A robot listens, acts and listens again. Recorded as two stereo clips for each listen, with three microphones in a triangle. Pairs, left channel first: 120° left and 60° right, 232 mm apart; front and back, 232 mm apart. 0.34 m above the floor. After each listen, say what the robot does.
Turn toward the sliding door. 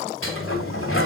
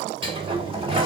Turn 115° left.
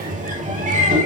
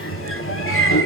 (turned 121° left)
Turn 10° right.
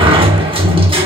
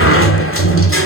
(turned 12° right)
Facing the sliding door, 1 to 2 m away.